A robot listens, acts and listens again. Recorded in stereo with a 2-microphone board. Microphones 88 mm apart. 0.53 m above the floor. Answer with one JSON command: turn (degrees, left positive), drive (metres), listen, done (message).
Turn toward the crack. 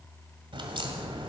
{"turn": -90}
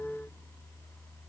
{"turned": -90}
{"done": "Facing where the crack came from. I can't hear it now."}